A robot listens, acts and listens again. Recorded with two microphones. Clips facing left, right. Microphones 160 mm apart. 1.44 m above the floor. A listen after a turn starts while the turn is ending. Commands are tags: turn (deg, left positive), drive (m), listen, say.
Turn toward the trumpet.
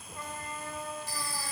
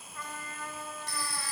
<turn deg="25"/>
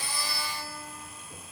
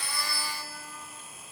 <listen/>
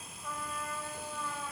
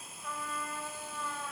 <say>Found it: a trumpet, straight ahead, over 4 m away.</say>